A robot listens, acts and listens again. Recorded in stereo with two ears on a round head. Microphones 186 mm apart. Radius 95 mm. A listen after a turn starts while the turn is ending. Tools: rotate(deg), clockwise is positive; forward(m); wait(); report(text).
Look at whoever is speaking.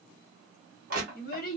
rotate(-45)
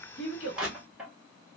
rotate(-75)
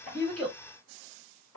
wait()
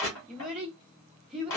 report("Facing the child speaking.")